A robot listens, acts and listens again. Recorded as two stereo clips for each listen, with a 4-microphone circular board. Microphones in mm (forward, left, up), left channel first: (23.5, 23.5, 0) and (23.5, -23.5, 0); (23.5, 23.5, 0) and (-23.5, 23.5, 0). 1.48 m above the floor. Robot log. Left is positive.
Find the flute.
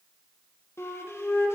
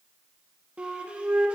note: The flute: 115° left.
cmd yaw +115
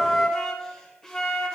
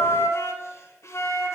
note: The flute is now 10° left.
cmd yaw +10
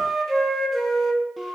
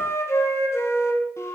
end: Facing the flute.